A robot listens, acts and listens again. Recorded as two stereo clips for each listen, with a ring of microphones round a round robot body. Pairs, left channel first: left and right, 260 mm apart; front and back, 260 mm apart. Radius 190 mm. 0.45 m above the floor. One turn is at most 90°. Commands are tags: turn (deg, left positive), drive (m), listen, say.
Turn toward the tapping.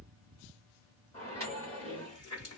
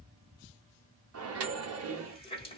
<listen/>
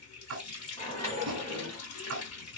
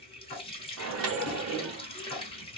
<turn deg="-60"/>
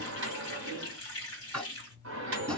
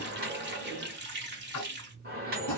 <say>Facing the tapping.</say>